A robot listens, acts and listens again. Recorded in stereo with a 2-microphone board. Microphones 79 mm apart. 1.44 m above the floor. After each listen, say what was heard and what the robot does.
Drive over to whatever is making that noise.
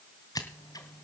The scissors: about 50° left or 130° left. Turn 50° left.
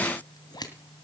So it is at 70° left. Turn 70° left.
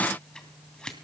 The scissors is now 10° left. Turn 10° left.
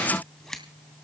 Drive 1.0 m forward.
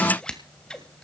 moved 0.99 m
The scissors is now 15° left. Turn 15° left.
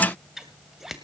Drive 1.0 m forward.
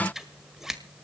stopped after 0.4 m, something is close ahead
I am next to the scissors.